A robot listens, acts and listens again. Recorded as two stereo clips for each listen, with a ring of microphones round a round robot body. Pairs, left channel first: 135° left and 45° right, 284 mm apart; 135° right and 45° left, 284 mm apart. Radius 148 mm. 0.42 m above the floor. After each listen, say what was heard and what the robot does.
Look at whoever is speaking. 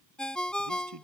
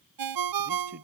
The man speaking: 15° right. Turn 15° right.
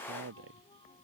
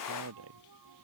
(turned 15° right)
Found it: a man speaking, straight ahead.